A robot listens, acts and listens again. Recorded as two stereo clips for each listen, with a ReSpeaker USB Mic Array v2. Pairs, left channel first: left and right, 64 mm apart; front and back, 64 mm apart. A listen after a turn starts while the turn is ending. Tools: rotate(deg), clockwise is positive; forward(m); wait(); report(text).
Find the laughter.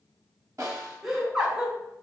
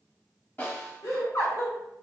report("Found it: laughter, straight ahead.")